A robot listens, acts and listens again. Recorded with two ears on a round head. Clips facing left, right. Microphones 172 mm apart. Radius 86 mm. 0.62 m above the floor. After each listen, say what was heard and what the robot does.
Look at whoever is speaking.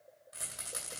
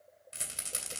Keep listening.
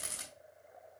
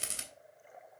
Keep listening.
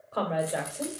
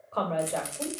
Turn 30° left.
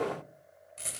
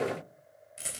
Keep listening.
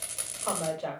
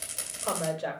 So it is at 15° right. Turn 15° right.
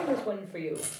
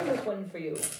Facing the woman speaking.